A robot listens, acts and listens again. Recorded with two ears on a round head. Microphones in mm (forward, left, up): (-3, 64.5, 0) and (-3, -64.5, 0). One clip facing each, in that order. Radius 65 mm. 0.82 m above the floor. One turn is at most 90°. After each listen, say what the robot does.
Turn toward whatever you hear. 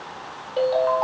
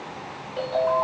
Turn 55° left.
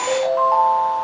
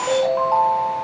Found it: a ringtone, straight ahead, 1 to 2 m away.